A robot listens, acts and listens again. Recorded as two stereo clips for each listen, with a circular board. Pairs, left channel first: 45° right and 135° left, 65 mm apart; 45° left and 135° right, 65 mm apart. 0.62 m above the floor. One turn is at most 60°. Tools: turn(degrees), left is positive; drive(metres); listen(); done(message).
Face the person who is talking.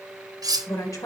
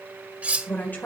turn(degrees=-15)
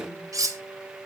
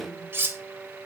listen()
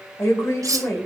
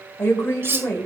done("Found it: a woman speaking, straight ahead, 1 to 2 m away.")